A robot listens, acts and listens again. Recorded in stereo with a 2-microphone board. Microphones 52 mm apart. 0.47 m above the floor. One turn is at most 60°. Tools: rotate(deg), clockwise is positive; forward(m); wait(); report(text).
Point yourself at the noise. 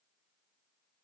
wait()
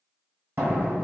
rotate(50)
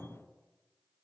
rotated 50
wait()
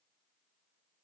report("I heard a door slam, but can't make it out now. It was about straight ahead or 80° right.")